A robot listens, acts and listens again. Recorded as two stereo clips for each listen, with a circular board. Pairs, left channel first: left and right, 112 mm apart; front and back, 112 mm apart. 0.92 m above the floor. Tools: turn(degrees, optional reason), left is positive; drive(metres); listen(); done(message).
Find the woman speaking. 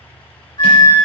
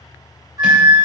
listen()
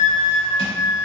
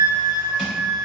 listen()
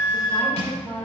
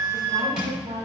turn(degrees=-175, reason="The woman speaking: 175° right.")
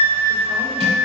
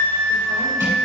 listen()
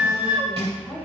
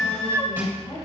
done("Found it: a woman speaking, straight ahead.")